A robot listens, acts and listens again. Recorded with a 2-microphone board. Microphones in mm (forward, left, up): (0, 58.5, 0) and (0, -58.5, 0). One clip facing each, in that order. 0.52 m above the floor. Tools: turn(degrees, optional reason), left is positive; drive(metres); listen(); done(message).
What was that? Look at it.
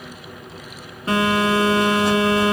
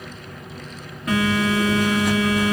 turn(degrees=30, reason="The phone buzzing: about 30° left or 150° left.")
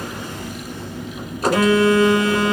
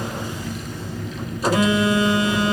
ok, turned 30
turn(degrees=120, reason="So it is at 120° left.")
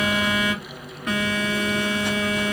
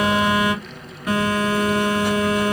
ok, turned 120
done("Found it: a phone buzzing, straight ahead.")